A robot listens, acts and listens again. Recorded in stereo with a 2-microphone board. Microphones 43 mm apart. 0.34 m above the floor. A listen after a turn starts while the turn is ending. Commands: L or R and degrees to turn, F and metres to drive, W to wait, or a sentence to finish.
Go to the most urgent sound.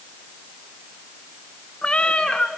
W
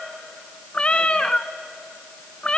W
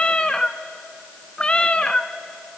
I can't make out anything urgent to turn to.